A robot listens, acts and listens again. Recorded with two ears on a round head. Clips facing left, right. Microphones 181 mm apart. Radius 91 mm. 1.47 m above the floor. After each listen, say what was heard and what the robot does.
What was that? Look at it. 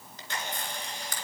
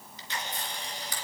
The camera shutter: about 45° left or 135° left. Turn 45° left.
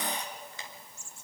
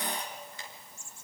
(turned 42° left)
So it is at 85° left. Turn 85° left.
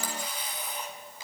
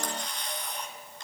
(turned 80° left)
Found it: a camera shutter, straight ahead, 2 to 4 m away.